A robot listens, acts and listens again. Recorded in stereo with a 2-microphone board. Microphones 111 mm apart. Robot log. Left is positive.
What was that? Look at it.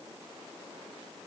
cmd idle
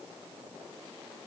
cmd idle
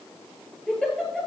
cmd yaw +30
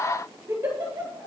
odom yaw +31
note: So it is at 25° right.
cmd yaw -25
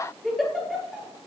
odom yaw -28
end: Facing the giggle, 2 to 4 m away.